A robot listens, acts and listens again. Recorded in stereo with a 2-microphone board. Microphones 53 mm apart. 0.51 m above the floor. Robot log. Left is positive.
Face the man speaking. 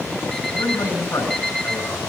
cmd yaw +90
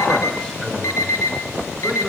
cmd idle
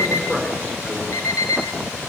note: The man speaking is now 20° left.
cmd yaw +20
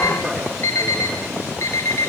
end: Found it: a man speaking, straight ahead.